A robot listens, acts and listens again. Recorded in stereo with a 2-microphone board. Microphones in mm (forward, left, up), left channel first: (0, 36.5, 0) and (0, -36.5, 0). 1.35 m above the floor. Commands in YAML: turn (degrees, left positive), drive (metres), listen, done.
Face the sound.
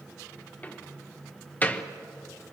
turn: 20
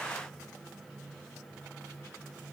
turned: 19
listen: true
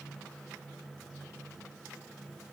done: "I heard a door slam, but can't make it out now. It was about 5° left or 140° left."